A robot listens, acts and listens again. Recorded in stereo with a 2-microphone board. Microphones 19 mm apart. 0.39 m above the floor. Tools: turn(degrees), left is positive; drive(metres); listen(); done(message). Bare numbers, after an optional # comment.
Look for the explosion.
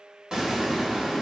# The explosion: about 45° right or 135° right.
turn(-45)
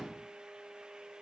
listen()
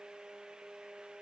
done("I heard an explosion, but can't make it out now. It was about straight ahead or 90° right.")